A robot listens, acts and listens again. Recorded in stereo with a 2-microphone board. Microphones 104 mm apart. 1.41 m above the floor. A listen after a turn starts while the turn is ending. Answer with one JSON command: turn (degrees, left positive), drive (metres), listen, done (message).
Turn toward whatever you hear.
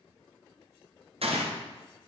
{"turn": -70}
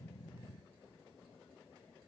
{"listen": true}
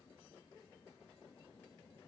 {"done": "I heard a gunshot, but can't make it out now. It was about straight ahead or 40° right."}